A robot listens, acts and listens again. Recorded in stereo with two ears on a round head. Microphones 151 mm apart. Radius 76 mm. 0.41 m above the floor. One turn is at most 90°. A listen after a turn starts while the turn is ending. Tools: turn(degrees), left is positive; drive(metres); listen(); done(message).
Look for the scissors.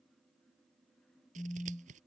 turn(degrees=-45)
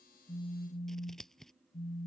done("Found it: scissors, straight ahead.")